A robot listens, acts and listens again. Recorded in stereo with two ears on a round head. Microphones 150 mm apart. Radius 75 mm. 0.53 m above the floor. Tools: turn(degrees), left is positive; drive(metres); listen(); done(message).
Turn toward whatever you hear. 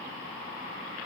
listen()
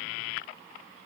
listen()
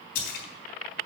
turn(degrees=55)
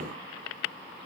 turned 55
listen()
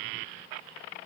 done("I heard a splash, but can't make it out now. It was about straight ahead or 70° left.")